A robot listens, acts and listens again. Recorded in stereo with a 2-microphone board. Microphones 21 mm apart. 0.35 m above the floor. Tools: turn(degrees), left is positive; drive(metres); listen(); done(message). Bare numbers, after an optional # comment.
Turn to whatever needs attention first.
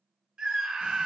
# The scream: about 45° right or 135° right.
turn(-45)
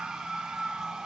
# So it is at 80° right.
turn(-80)
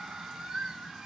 # The scream is now 20° right.
turn(-20)
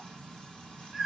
done("Found it: a scream, straight ahead.")